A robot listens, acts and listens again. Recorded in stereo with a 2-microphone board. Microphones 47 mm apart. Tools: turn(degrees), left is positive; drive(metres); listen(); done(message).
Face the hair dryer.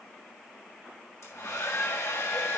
turn(degrees=90)
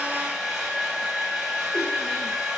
turn(degrees=-10)
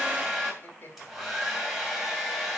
done("Found it: a hair dryer, straight ahead.")